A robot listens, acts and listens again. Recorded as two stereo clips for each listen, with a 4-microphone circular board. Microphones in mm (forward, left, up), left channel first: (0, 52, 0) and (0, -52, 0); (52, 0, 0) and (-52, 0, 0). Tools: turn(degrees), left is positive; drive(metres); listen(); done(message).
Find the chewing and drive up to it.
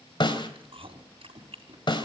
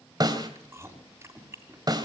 turn(degrees=-115)
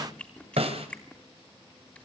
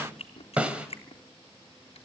turn(degrees=15)
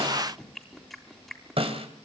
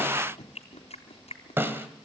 drive(metres=1.0)
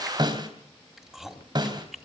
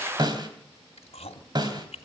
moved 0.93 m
drive(metres=1.0)
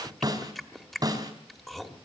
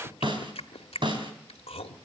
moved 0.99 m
drive(metres=1.0)
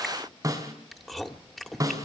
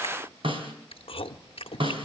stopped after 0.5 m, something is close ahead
done("I am next to the chewing.")